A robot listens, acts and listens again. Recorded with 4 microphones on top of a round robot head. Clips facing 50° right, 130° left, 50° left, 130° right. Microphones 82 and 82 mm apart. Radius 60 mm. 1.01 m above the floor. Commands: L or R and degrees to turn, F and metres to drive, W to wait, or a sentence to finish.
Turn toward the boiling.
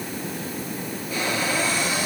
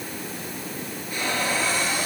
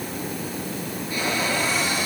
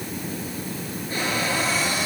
W
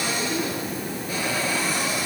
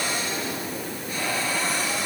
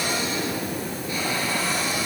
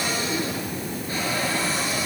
W
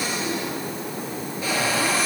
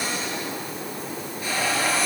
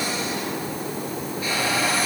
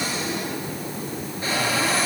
I can't make out boiling to turn to.